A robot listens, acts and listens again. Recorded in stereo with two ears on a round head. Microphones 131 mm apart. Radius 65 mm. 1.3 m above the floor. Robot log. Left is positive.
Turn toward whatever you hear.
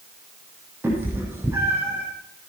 cmd yaw -30
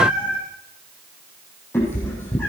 note: So it is at 20° left.
cmd yaw +20
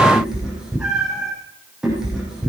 end: Found it: a cat meowing, straight ahead.